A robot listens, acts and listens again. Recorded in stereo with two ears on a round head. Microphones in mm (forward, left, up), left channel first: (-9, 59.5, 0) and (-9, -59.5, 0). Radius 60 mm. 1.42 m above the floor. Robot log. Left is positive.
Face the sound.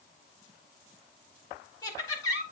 note: The laughter: about 25° left or 155° left.
cmd yaw +25
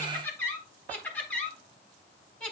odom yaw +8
cmd yaw +30
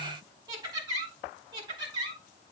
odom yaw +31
note: So it is at 30° right.
cmd yaw -30
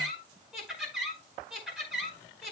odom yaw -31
end: Facing the laughter, over 4 m away.